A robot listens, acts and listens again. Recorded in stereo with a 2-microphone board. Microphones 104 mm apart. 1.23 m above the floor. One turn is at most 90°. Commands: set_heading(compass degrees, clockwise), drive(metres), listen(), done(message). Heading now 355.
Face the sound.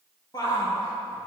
set_heading(315)
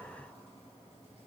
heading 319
listen()
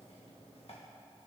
listen()
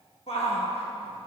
set_heading(229)
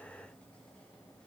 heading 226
set_heading(216)
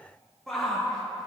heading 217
done("Found it: a shout, straight ahead, 1 to 2 m away.")